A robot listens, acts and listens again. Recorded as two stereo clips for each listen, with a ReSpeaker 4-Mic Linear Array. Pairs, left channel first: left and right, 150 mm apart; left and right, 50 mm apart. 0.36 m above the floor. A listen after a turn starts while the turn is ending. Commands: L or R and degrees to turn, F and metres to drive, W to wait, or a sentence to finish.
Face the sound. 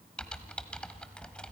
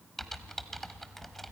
L30
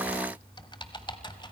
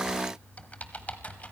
L145
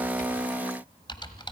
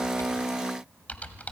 L35
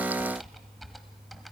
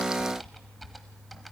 Found it: typing on a keyboard, straight ahead.